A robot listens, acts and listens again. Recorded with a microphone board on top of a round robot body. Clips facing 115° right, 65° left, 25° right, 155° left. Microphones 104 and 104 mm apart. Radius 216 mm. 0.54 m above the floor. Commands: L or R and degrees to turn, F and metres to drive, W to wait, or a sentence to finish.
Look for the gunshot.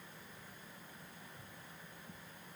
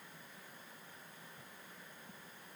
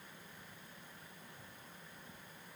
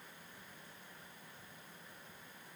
W
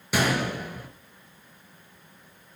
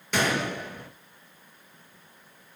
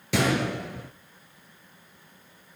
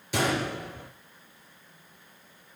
R30
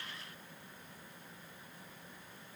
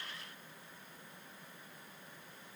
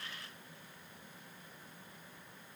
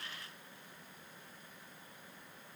Facing where the gunshot came from. I can't hear it now.